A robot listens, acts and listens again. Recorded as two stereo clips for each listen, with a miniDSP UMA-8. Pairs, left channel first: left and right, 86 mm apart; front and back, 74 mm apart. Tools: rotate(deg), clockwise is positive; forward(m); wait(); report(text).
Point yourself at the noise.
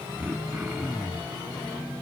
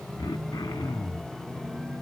rotate(10)
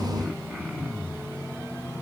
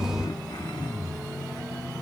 report("Found it: throat clearing, straight ahead, 1 to 2 m away.")